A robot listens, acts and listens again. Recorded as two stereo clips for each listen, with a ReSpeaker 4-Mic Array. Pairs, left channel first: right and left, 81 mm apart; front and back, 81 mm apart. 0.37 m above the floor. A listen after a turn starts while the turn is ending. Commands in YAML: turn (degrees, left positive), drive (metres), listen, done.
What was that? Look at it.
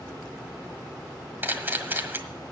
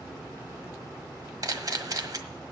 turn: 150
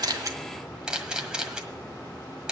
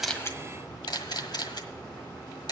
turn: 10
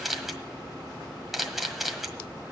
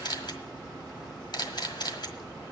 done: "Facing the camera shutter, 1 to 2 m away."